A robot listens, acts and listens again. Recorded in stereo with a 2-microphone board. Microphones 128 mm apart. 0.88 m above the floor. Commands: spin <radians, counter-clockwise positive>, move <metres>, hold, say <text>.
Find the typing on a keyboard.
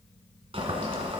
hold
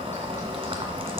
hold
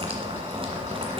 say I can't make out typing on a keyboard to turn to.